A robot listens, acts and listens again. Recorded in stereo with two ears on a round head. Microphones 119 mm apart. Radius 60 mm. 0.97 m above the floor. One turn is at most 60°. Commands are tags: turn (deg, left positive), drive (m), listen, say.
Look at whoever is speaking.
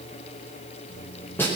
<listen/>
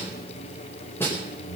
<listen/>
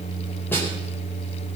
<say>I can't make out anyone speaking to turn to.</say>